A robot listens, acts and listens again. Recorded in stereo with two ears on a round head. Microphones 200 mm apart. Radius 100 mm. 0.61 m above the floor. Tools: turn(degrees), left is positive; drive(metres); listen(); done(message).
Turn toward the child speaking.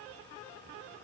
listen()
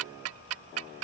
listen()
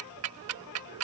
done("I can't make out a child speaking, only ticking.")